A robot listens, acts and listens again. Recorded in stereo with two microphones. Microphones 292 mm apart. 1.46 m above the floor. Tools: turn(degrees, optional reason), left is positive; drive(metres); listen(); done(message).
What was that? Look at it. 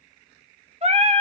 turn(degrees=-20, reason="The singing: about 20° right or 160° right.")
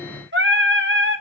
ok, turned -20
turn(degrees=-140, reason="So it is at 140° right.")
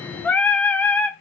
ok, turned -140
done("Found it: singing, straight ahead, under 1 m away.")